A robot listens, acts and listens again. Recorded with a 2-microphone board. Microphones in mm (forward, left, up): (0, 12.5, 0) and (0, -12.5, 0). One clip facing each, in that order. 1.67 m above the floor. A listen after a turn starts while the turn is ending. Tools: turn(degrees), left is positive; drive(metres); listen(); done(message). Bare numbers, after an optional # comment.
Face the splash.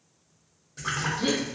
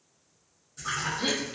# The splash: about 30° left or 150° left.
turn(30)
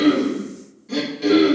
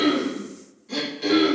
listen()
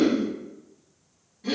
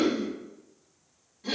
done("I heard a splash, but can't make it out now. It was about straight ahead or 120° left.")